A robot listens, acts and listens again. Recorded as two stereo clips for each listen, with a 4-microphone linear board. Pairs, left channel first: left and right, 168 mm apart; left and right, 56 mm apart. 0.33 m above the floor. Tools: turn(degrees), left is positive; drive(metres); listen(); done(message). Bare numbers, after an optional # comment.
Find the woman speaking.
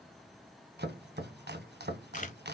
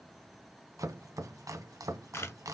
listen()
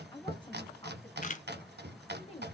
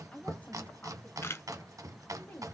# The woman speaking: about 35° left or 145° left.
turn(35)
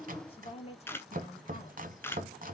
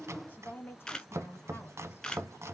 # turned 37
# The woman speaking: about 45° left or 135° left.
turn(45)
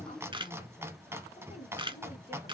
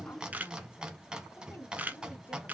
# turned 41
# The woman speaking: about 35° left or 145° left.
turn(35)
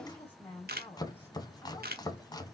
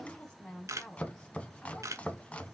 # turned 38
# So it is at 10° left.
turn(10)
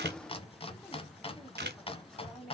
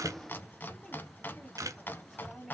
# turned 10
done("Facing the woman speaking, 1 to 2 m away.")